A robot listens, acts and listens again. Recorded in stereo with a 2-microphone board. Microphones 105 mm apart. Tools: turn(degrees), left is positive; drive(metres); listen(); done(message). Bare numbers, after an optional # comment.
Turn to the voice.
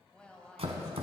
turn(30)
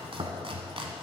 listen()
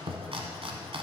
listen()
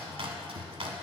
done("I heard a woman speaking, but can't make it out now. It was about 20° right or 140° left.")